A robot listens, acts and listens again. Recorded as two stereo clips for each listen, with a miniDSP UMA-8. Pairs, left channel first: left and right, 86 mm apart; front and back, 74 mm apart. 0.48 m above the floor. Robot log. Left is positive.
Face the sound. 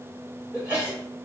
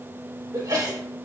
note: The sneeze: 160° right.
cmd yaw -160
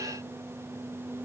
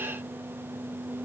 end: Facing where the sneeze came from. I can't hear it now.